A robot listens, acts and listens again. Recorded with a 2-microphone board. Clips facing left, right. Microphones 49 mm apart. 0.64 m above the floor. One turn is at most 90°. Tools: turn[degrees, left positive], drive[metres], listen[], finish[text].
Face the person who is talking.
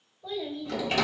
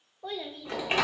Thought: The child speaking: about 65° right or 115° right.
Action: turn[-65]
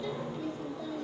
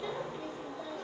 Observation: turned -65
Thought: So it is at 35° right.
Action: turn[-35]
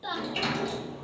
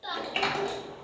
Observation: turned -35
Action: finish[Found it: a child speaking, straight ahead.]